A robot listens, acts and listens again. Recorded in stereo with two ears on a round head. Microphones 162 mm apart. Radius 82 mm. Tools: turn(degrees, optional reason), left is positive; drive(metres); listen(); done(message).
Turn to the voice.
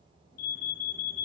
listen()
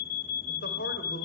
turn(degrees=60, reason="The man speaking: about 60° left or 120° left.")
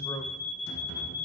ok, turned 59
turn(degrees=25, reason="So it is at 25° left.")
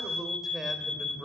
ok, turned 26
done("Facing the man speaking.")